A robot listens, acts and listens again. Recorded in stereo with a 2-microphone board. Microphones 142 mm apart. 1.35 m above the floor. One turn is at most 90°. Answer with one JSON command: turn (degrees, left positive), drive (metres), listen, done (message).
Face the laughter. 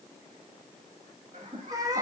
{"turn": -60}
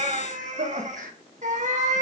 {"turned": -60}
{"turn": -90}
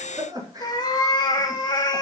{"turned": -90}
{"turn": -25}
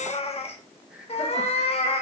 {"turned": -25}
{"listen": true}
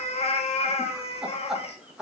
{"done": "Facing the laughter."}